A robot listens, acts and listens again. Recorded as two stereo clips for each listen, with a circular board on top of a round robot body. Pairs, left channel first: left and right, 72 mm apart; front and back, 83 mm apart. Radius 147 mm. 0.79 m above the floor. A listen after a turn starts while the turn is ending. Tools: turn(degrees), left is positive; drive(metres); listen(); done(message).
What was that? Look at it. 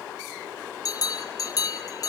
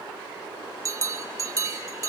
turn(degrees=130)
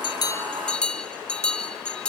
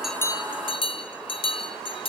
turn(degrees=15)
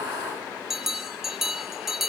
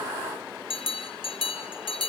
done("Found it: a bell, straight ahead.")